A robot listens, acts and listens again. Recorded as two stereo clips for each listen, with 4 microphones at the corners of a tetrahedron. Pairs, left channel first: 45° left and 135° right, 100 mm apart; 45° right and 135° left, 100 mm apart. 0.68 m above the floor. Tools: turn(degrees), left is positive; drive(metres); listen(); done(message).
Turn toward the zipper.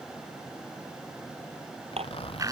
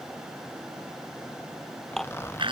turn(degrees=20)
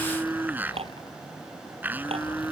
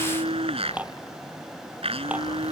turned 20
listen()
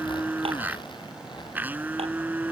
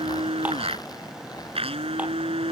listen()
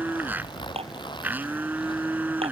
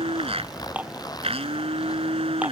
done("Facing the zipper.")